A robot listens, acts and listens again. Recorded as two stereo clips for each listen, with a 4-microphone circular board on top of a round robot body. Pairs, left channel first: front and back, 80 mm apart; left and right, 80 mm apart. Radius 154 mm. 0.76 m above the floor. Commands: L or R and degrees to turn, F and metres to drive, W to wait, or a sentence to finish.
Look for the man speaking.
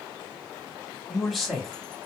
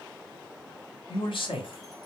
L85
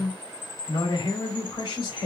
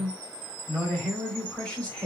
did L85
L10
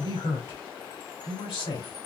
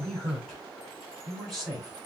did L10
Found it: a man speaking, straight ahead, 2 to 4 m away.